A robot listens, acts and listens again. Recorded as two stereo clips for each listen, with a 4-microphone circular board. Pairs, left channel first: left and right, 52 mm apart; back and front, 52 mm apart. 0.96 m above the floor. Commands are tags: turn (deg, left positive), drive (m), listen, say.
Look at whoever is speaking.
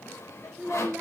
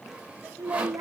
<turn deg="-20"/>
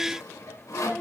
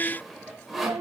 <say>Found it: a child speaking, straight ahead, 1 to 2 m away.</say>